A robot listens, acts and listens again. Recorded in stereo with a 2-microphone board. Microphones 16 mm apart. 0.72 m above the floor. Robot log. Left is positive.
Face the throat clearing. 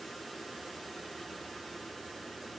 cmd idle
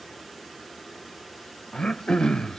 note: The throat clearing: about 65° left or 115° left.
cmd yaw +65
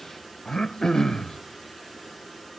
note: So it is at 50° left.
cmd yaw +50
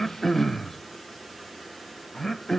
note: The throat clearing is now 25° left.
cmd yaw +25
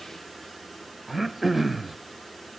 end: Found it: throat clearing, straight ahead.